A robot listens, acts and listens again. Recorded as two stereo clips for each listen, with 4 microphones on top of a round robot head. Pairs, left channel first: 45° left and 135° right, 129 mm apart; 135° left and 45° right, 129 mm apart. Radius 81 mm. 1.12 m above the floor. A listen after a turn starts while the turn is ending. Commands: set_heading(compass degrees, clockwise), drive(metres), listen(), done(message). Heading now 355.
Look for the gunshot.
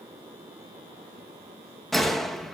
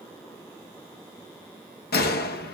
set_heading(220)
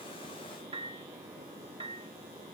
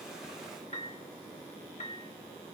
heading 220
done("Facing where the gunshot came from. I can't hear it now.")